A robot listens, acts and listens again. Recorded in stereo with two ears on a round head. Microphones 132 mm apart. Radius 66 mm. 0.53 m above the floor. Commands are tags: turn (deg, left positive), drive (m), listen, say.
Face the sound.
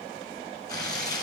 <turn deg="25"/>
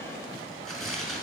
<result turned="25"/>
<say>Facing the tearing paper, 1 to 2 m away.</say>